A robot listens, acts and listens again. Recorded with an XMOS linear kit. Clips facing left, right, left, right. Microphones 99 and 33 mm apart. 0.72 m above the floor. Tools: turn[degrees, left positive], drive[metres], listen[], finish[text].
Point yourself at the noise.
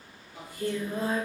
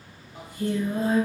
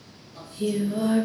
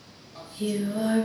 Thought: The singing: about 20° right or 160° right.
Action: turn[-20]
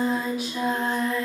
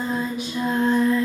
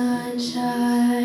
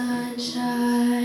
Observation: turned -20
Thought: So it is at 10° left.
Action: turn[10]
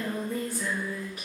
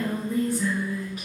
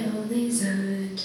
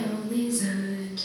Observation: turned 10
Action: finish[Facing the singing.]